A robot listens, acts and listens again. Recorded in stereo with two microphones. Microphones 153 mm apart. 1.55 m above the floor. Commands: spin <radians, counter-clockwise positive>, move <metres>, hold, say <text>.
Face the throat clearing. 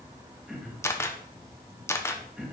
spin -0.52
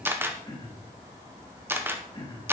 spin 0.52
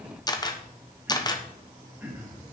spin -0.17
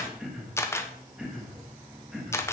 say Facing the throat clearing, 2 to 4 m away.